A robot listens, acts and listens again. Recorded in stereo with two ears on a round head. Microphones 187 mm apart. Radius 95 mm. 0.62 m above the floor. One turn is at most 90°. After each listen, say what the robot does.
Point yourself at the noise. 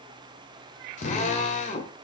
Turn 35° left.
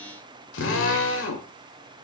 Turn 90° left.
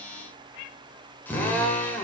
Turn 10° left.
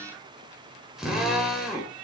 Found it: a drill, straight ahead, 2 to 4 m away.